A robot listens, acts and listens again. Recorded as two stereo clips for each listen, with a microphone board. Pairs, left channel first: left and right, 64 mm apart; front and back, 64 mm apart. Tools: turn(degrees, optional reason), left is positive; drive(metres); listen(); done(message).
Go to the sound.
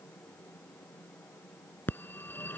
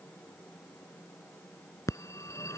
turn(degrees=35, reason="The phone ringing: 35° left.")
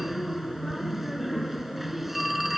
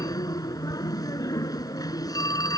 drive(metres=1.0)
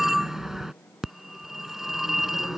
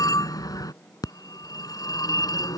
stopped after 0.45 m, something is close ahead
done("Something is in my way. I am facing the phone ringing but have not reached it.")